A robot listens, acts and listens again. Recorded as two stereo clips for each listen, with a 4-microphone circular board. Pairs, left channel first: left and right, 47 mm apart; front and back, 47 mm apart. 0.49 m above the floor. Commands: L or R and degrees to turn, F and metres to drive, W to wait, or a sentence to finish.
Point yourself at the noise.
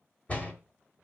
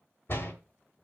L35
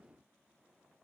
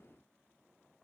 Facing where the door slam came from. I can't hear it now.